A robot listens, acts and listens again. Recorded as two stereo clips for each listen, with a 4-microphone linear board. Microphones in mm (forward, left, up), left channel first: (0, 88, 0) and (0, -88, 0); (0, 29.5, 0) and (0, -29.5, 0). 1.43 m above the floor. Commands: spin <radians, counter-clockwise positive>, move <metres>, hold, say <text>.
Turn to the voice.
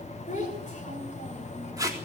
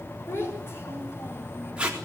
spin 0.79
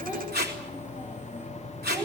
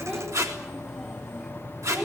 spin -0.17
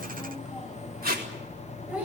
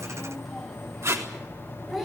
spin -0.17
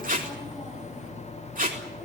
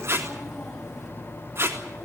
hold
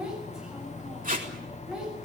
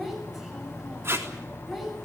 say Found it: a child speaking, straight ahead, over 4 m away.